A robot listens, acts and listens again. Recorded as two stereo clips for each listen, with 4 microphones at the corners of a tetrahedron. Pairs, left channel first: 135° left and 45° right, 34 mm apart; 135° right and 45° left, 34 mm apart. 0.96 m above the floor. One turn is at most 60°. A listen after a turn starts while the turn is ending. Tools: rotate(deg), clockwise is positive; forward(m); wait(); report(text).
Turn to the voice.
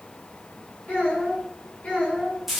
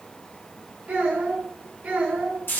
rotate(-60)
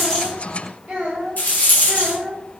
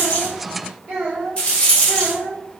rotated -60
report("Facing the child speaking.")